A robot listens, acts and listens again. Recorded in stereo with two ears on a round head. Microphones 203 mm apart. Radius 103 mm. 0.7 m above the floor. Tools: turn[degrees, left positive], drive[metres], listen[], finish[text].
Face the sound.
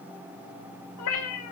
Action: turn[90]
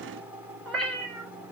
Action: finish[Facing the cat meowing, 2 to 4 m away.]